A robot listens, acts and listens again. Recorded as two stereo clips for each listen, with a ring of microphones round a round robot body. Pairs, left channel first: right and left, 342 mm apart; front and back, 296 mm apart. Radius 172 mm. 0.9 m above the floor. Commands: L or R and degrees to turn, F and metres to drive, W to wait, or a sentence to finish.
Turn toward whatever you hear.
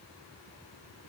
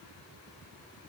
W
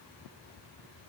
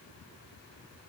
W
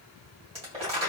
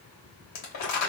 L15
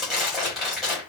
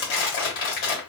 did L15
Facing the crumpling.